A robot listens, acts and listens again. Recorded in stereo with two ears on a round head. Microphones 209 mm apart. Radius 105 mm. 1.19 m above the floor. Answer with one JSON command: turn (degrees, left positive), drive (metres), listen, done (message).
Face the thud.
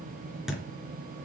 {"turn": 30}
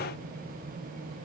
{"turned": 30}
{"listen": true}
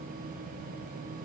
{"done": "I heard a thud, but can't make it out now. It was about 30° right or 150° left."}